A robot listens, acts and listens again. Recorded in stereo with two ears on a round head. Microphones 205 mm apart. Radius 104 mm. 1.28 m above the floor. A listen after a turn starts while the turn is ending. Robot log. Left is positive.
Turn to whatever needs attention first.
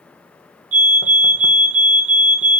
note: The fire alarm: about 60° right or 120° right.
cmd yaw -60
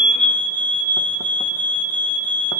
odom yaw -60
note: So it is at 40° right.
cmd yaw -40
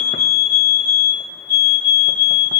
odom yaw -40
note: The fire alarm is now 15° right.
cmd yaw -15
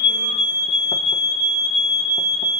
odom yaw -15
end: Found it: a fire alarm, straight ahead.